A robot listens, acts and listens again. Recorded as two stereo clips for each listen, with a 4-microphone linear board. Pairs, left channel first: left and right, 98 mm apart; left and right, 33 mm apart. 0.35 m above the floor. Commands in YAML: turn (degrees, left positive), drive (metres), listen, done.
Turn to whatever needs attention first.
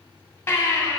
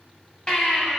turn: 25
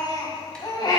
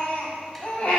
turn: 125
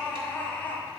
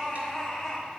turn: 20
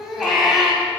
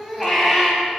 done: "Found it: a baby crying, straight ahead."